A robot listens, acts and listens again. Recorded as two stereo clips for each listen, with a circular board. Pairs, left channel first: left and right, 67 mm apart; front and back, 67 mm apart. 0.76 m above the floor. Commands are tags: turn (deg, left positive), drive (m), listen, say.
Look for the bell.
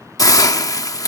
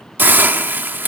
<listen/>
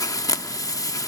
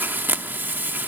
<listen/>
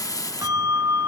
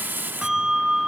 <turn deg="-100"/>
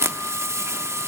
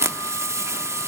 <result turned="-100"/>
<listen/>
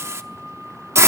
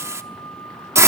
<say>Facing the bell, 2 to 4 m away.</say>